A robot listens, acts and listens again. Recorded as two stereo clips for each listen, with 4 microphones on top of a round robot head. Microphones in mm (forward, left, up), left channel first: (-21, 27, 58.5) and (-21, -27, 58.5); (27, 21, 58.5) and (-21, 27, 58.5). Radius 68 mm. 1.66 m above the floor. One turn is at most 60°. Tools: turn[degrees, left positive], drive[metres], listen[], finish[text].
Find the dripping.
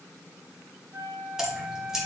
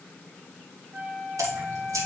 Thought: The dripping: 170° right.
Action: turn[-60]
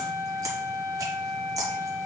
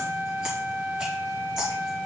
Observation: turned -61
Thought: The dripping is now 110° right.
Action: turn[-60]
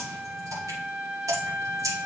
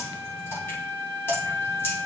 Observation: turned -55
Thought: The dripping is now 55° right.
Action: turn[-55]
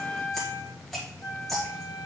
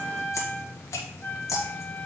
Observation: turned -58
Action: finish[Found it: dripping, straight ahead.]